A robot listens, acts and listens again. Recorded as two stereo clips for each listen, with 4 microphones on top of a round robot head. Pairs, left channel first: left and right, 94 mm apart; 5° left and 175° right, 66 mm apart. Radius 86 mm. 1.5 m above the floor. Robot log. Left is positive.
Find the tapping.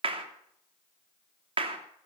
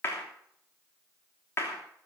cmd idle
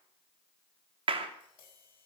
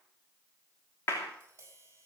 note: The tapping: 130° left.
cmd yaw +130
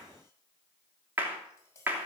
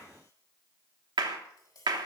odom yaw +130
note: The tapping is now 30° left.
cmd yaw +30
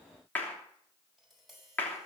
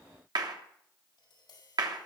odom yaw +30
end: Found it: tapping, straight ahead, over 4 m away.